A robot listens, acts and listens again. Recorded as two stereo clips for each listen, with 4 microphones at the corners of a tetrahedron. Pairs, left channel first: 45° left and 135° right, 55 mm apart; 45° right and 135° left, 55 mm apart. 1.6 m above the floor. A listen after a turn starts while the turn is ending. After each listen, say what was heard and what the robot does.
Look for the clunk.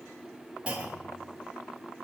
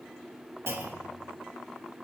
The clunk: 160° left. Turn 160° left.
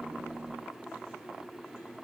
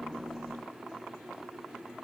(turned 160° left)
Facing where the clunk came from. I can't hear it now.